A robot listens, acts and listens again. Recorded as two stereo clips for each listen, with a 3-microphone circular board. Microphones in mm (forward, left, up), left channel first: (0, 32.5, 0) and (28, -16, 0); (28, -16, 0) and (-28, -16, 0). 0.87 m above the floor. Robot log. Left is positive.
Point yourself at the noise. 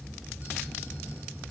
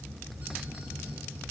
cmd idle
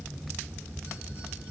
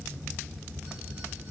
cmd idle
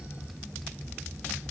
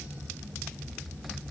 end: I can't make out anything to turn to.